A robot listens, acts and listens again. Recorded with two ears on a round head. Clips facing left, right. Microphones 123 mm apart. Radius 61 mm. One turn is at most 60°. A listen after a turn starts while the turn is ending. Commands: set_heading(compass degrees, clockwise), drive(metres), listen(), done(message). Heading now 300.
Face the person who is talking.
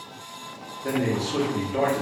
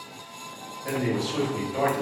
set_heading(240)
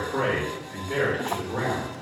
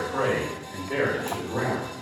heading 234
done("Found it: a man speaking, straight ahead, 1 to 2 m away.")